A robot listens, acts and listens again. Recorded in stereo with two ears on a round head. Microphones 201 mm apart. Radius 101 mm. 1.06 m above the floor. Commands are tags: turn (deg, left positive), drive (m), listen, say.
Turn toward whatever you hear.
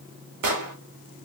<turn deg="-90"/>
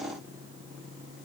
<say>Facing where the explosion came from. I can't hear it now.</say>